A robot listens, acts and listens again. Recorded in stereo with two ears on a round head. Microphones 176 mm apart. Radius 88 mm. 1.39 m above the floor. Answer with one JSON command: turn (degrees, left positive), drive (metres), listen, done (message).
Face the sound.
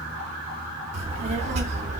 {"turn": -40}
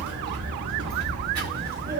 {"turn": -45}
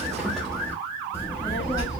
{"turn": 20}
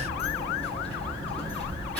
{"done": "Found it: a child speaking, straight ahead."}